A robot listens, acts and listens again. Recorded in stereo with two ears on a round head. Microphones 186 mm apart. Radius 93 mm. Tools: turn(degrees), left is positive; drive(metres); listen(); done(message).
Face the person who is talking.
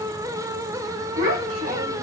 turn(degrees=-70)
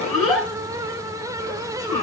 done("Facing the child speaking, 1 to 2 m away.")